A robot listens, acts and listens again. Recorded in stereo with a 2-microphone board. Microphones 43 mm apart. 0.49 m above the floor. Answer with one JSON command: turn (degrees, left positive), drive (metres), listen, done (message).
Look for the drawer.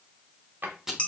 {"turn": -45}
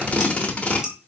{"listen": true}
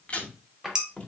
{"done": "Facing the drawer."}